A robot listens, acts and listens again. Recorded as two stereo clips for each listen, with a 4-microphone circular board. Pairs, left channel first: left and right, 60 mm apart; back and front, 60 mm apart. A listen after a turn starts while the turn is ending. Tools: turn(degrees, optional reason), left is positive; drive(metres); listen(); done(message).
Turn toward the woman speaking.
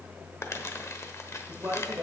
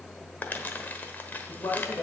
turn(degrees=-140, reason="The woman speaking: 140° right.")
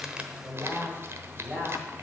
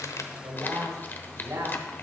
turn(degrees=-25, reason="The woman speaking is now 25° right.")
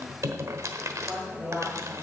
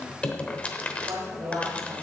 done("Facing the woman speaking, over 4 m away.")